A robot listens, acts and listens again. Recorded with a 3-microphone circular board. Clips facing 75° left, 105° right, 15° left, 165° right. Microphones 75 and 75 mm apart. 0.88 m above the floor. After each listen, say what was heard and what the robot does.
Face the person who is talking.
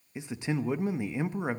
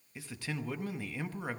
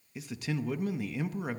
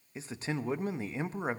The man speaking: 140° left. Turn 140° left.
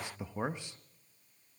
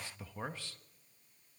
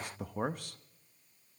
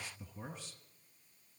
Facing the man speaking.